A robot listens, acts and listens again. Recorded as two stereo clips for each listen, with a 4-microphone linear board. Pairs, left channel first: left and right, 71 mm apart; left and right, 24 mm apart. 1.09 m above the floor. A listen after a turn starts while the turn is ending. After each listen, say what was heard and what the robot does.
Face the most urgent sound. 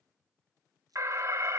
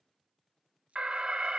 The alarm: about 45° right or 135° right. Turn 45° right.
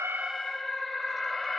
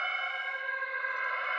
Found it: an alarm, straight ahead, under 1 m away.